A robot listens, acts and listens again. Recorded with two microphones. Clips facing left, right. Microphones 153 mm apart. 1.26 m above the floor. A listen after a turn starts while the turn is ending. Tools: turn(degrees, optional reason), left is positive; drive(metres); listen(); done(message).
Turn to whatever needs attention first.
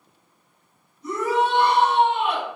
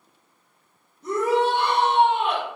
turn(degrees=-55, reason="The shout: about 55° right or 125° right.")
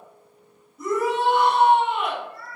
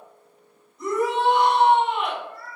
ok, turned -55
done("Facing the shout, 1 to 2 m away.")